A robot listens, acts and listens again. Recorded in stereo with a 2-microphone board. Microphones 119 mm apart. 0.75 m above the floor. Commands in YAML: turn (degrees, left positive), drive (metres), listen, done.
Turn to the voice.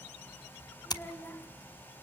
turn: 30
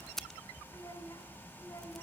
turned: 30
turn: 150
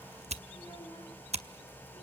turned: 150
listen: true
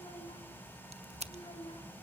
turn: 50
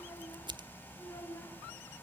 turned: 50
turn: 25
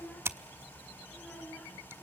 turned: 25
done: "Facing the child speaking."